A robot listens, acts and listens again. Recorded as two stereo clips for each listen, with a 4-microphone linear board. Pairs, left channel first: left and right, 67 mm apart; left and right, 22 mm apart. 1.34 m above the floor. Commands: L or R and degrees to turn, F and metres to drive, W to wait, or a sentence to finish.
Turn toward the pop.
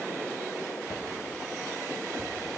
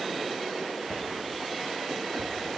W
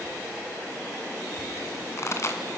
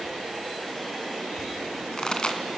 L45
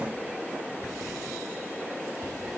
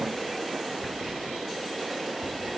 W
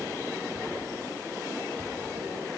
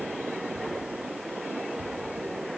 I heard a pop, but can't make it out now. It was about straight ahead or 90° left.